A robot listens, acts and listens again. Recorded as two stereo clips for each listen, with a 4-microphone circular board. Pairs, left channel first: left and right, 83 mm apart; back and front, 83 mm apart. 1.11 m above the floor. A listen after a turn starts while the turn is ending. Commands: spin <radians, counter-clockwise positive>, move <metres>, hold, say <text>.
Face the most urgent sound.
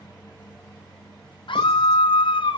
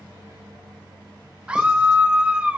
spin 1.31
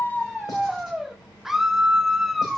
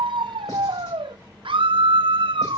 say Found it: a scream, straight ahead.